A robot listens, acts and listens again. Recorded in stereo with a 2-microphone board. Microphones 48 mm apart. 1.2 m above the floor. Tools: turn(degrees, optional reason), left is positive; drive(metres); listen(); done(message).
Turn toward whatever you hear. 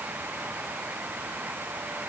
listen()
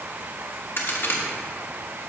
turn(degrees=60, reason="The crack: about 60° left or 120° left.")
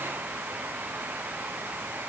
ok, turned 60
listen()
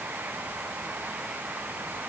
done("I heard a crack, but can't make it out now. It was about straight ahead or 60° left.")